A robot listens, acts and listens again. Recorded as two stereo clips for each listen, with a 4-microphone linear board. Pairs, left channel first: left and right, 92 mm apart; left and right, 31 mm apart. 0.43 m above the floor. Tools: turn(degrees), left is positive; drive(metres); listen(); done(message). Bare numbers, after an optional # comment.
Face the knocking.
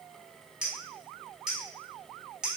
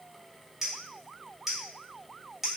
listen()
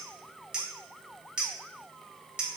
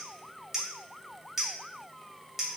listen()
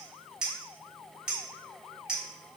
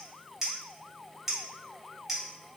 done("I can't make out knocking, only a clink.")